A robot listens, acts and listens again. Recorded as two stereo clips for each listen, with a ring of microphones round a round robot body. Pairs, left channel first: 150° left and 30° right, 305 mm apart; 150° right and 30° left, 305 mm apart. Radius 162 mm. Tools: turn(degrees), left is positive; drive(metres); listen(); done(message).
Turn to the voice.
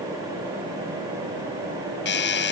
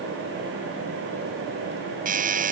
listen()
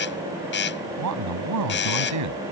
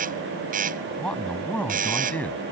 turn(degrees=-65)
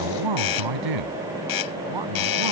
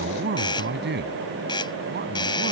turn(degrees=-30)
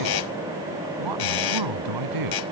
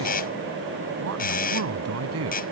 turn(degrees=-15)
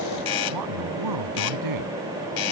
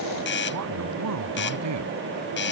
done("Found it: a man speaking, straight ahead.")